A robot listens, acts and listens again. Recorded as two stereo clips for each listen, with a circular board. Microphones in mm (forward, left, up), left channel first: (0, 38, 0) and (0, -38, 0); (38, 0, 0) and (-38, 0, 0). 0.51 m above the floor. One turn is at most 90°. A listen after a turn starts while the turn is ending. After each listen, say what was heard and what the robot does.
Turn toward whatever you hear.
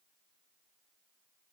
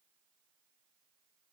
Keep listening.
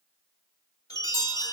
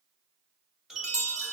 The chime: 100° left. Turn 90° left.
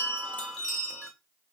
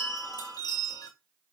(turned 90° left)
The chime is now 10° left. Turn 10° left.
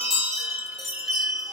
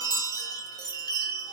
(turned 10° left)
Facing the chime, 1 to 2 m away.